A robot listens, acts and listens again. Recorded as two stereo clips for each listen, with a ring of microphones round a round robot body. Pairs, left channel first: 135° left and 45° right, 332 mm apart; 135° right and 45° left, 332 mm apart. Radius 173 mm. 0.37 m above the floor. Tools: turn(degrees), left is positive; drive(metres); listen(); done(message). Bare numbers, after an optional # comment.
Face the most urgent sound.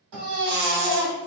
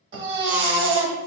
# The baby crying: 10° right.
turn(-10)
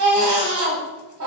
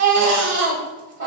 done("Found it: a baby crying, straight ahead.")